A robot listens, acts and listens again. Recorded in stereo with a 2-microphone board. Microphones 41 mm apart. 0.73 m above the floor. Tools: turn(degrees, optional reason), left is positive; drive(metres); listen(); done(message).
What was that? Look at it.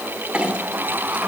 turn(degrees=-25, reason="The clink: about 25° right or 155° right.")
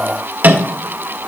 turn(degrees=-130, reason="So it is at 130° right.")
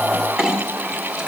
turn(degrees=-25, reason="The clink is now 25° right.")
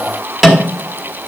done("Found it: a clink, straight ahead.")